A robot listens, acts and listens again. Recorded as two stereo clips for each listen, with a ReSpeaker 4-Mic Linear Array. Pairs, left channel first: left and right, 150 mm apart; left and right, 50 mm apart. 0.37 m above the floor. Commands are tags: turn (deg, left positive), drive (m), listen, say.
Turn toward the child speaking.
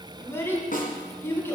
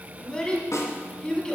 <turn deg="15"/>
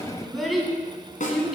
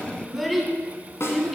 <say>Facing the child speaking, 2 to 4 m away.</say>